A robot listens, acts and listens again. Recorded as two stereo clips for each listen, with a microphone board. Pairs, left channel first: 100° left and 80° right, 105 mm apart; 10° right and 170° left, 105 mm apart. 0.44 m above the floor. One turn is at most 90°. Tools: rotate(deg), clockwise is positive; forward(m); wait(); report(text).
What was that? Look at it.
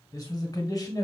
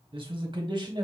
rotate(-90)
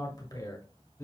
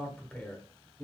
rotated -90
rotate(-50)
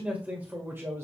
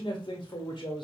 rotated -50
rotate(20)
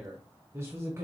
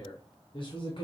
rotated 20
rotate(25)
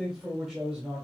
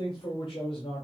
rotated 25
report("Found it: a man speaking, straight ahead, 1 to 2 m away.")